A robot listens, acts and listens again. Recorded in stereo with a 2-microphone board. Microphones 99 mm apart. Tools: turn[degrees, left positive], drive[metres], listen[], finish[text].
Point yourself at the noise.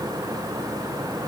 Action: listen[]
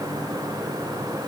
Action: listen[]
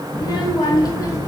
Thought: The child speaking: about 35° left or 145° left.
Action: turn[35]
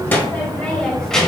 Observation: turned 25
Action: finish[Facing the child speaking.]